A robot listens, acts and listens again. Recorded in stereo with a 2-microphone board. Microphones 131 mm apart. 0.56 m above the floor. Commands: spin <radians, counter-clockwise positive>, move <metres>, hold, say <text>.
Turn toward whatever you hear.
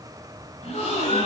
spin 0.96
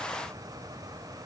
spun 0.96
hold
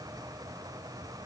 say I heard a gasp, but can't make it out now. It was about straight ahead or 70° left.